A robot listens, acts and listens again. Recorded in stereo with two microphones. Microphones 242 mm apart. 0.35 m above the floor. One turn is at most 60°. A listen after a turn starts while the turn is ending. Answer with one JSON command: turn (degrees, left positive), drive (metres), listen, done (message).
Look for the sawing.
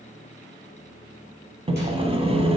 {"turn": -25}
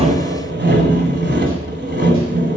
{"turn": -60}
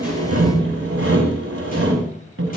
{"turn": -60}
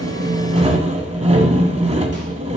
{"turn": -30}
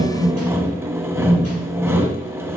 {"turn": -10}
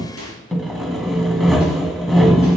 {"done": "Facing the sawing."}